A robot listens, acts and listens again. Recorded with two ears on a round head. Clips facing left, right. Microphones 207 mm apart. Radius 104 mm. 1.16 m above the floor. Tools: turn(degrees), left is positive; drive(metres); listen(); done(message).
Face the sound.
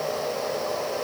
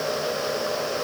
listen()
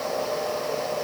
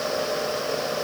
listen()
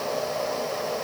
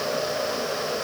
done("I can't make out anything to turn to.")